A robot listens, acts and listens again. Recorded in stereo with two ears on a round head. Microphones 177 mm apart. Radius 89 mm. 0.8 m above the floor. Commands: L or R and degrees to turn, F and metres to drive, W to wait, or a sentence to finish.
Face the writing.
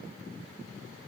W
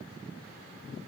W
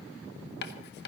L55
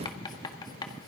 L25
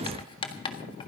L30
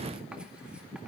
W
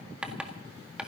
Facing the writing, 1 to 2 m away.